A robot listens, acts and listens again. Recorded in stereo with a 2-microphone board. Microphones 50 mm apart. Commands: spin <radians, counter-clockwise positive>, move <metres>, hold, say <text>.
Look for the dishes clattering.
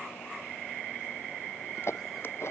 spin 1.05
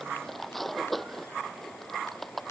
say Facing the dishes clattering.